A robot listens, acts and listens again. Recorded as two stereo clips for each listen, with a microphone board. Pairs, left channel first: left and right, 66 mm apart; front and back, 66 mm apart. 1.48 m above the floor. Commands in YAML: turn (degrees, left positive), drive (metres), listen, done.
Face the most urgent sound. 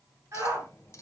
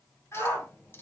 turn: -50
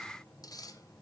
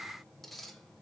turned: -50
listen: true
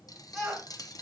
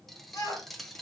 turn: -10
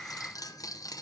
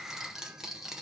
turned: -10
listen: true
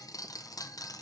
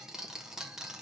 listen: true
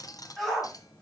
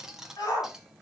done: "Facing the shout, over 4 m away."